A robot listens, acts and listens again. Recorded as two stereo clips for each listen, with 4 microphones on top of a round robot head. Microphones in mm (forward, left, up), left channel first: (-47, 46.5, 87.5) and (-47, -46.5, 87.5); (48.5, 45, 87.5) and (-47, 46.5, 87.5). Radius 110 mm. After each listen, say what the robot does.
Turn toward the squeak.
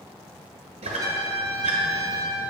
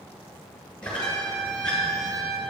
Turn 80° right.
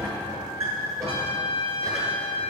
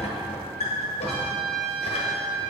Turn 25° right.
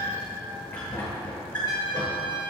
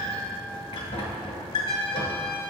Turn 10° left.
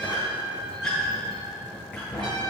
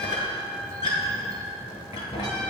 Found it: a squeak, straight ahead.